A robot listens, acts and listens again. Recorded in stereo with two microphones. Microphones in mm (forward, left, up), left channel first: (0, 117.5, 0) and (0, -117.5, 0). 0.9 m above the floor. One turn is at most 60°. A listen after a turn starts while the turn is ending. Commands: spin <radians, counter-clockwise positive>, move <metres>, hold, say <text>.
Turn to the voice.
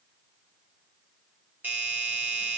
hold
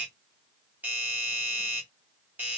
hold
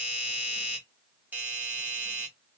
say I can't make out anyone speaking, only a doorbell.